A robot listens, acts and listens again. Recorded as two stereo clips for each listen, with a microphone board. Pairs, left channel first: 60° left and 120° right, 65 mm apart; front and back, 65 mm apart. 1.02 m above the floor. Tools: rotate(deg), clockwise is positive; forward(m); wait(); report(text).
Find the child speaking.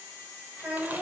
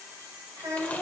rotate(175)
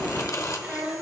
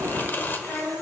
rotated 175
rotate(50)
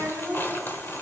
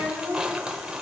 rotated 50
rotate(-10)
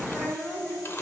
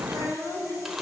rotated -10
rotate(-10)
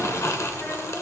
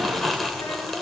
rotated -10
wait()
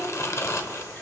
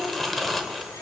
wait()
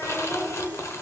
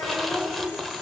report("Facing the child speaking.")